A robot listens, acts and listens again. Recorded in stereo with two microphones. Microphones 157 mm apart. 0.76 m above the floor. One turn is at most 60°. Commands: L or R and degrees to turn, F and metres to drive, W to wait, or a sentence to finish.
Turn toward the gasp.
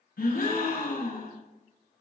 L60
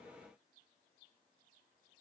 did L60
W
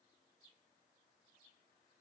I heard a gasp, but can't make it out now. It was about 5° left or 55° left.